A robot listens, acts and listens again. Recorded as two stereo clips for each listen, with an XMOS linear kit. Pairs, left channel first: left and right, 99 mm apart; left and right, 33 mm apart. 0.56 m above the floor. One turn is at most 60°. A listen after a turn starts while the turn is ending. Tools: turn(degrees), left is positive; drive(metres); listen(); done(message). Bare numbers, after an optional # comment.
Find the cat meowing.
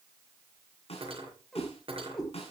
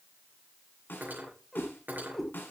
turn(30)
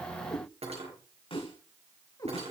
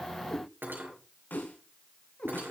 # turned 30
# So it is at 145° left.
turn(60)
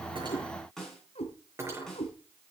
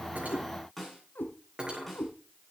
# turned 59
# The cat meowing is now 85° left.
turn(60)
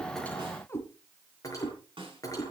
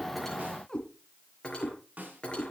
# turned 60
# The cat meowing is now 25° left.
turn(25)
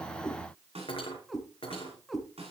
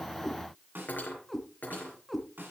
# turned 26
done("Found it: a cat meowing, straight ahead, 2 to 4 m away.")